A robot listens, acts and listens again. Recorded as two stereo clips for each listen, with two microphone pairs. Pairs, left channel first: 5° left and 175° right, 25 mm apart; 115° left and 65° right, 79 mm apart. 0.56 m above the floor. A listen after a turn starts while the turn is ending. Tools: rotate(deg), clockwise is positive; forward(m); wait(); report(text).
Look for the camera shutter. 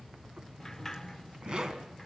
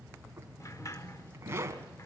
wait()
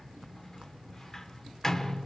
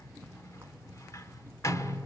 wait()
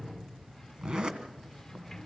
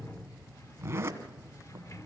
report("I can't make out a camera shutter, only a zipper and a sliding door.")